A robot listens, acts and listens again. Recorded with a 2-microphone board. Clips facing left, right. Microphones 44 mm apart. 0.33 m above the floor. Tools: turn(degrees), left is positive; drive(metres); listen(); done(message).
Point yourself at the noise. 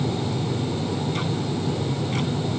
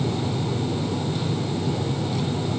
listen()
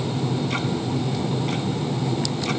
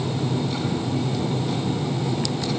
listen()
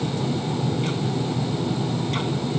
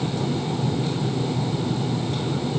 done("I can't make out anything.")